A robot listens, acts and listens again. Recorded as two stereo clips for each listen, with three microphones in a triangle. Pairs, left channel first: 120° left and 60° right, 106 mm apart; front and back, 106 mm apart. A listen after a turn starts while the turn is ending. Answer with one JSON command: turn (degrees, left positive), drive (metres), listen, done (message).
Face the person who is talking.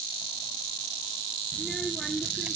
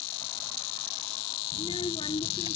{"turn": 35}
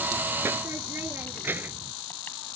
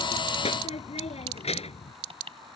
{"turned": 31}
{"turn": 10}
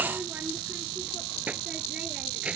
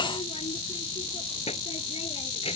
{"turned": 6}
{"turn": 20}
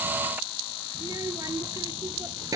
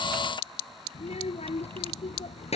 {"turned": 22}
{"done": "Facing the child speaking."}